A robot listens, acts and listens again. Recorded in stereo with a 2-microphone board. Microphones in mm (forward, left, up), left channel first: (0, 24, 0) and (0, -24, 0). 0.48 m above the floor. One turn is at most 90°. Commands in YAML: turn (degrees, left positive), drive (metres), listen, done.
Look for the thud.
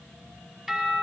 listen: true
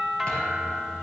turn: 20
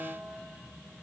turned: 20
listen: true
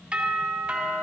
done: "I heard a thud, but can't make it out now. It was about straight ahead or 140° left."